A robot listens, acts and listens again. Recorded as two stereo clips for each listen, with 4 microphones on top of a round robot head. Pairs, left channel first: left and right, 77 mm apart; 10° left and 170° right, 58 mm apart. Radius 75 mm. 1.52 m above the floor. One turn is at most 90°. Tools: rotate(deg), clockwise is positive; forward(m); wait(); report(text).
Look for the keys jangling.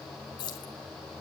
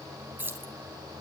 rotate(-90)
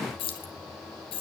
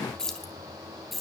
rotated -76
rotate(-90)
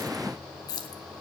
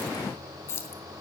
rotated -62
rotate(-55)
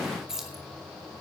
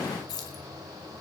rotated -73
report("Found it: keys jangling, straight ahead.")